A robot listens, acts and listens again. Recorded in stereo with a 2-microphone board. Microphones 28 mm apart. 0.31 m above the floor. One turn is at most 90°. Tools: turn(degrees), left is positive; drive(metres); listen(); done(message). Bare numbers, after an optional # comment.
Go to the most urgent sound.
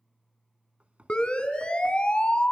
# The siren: about 35° left or 145° left.
turn(35)
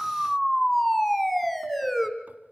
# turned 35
drive(1.0)
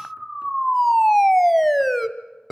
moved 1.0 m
drive(1.0)
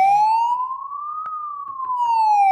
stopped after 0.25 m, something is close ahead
done("I am next to the siren.")